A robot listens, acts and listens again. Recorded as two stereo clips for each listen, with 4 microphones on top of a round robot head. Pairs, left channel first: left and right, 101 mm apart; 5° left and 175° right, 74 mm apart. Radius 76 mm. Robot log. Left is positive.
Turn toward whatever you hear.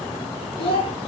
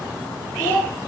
note: The child speaking: 65° left.
cmd yaw +65
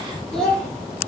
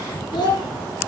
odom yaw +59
note: The child speaking is now 10° left.
cmd yaw +10
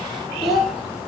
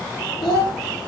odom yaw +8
end: Facing the child speaking.